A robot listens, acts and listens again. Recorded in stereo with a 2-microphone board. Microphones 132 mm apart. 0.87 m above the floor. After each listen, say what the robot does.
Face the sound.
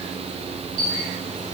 Turn 90° right.
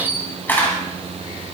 Turn 15° left.
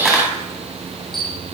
Facing the camera shutter.